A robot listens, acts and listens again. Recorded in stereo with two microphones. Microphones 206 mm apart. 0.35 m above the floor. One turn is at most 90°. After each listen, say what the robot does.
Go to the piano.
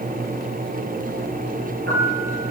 Turn 90° right.
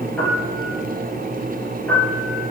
Drive 1.0 m forward.
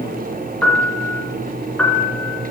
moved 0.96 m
Drive 1.0 m forward.
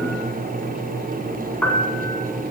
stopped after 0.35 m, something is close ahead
Arrived at the piano, straight ahead.